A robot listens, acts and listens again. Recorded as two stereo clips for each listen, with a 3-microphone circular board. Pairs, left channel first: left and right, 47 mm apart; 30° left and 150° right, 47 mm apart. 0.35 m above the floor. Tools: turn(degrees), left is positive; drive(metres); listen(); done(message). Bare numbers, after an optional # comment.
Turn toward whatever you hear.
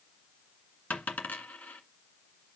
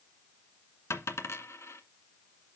# The dropped coin: 35° left.
turn(35)
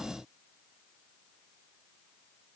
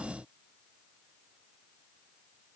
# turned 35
done("I heard a dropped coin from this way, but can't make it out now.")